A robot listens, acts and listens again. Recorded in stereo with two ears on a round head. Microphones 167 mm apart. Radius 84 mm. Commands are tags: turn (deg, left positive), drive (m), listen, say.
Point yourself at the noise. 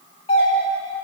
<turn deg="30"/>
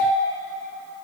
<turn deg="115"/>
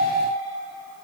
<listen/>
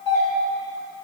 <turn deg="25"/>
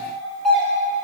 <say>Facing the doorbell, 1 to 2 m away.</say>